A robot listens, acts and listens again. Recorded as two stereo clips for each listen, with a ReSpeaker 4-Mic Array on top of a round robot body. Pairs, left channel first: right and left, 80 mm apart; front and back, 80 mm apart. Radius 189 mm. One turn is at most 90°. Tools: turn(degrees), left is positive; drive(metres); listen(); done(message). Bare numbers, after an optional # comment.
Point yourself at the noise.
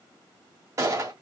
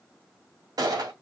# The gunshot: 140° left.
turn(90)
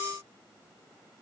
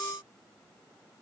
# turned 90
# Nothing new. It was at 50° left.
turn(50)
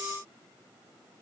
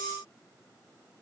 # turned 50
done("I heard a gunshot from this way, but can't make it out now.")